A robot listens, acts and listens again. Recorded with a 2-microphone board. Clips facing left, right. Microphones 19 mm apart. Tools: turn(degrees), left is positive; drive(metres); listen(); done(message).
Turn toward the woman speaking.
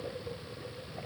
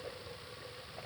listen()
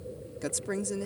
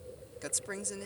turn(degrees=-30)
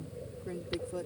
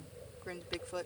turn(degrees=-135)
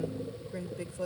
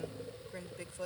done("Found it: a woman speaking, straight ahead.")